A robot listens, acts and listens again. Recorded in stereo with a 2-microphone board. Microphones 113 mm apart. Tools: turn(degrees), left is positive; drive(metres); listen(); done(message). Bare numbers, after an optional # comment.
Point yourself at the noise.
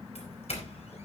# The doorbell: about 70° left or 110° left.
turn(70)
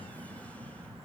listen()
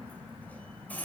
# So it is at 15° left.
turn(15)
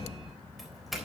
done("Found it: a doorbell, straight ahead, 2 to 4 m away.")